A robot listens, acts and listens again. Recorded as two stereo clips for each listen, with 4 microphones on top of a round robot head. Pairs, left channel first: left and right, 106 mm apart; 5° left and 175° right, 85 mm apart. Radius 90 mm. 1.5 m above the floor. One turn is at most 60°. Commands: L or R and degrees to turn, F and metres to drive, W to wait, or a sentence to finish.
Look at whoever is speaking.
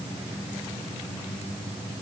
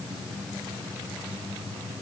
W
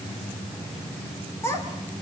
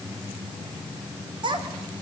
L60
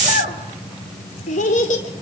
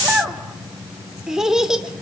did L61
L60
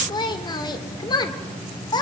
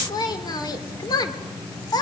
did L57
L40
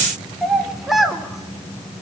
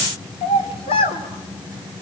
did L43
Facing the child speaking, 2 to 4 m away.